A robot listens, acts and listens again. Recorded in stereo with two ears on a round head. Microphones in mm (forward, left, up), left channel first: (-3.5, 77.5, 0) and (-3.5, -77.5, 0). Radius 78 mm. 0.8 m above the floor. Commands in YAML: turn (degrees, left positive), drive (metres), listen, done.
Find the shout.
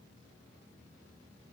listen: true
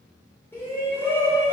turn: 30
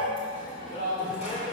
turn: 135
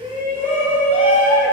turn: -15
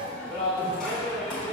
done: "Found it: a shout, straight ahead."